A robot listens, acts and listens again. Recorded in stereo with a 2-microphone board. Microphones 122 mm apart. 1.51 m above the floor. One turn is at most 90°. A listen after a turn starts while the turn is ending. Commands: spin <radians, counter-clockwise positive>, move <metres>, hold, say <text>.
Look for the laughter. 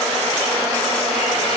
hold
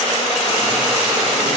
hold
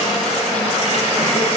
say I can't make out laughter to turn to.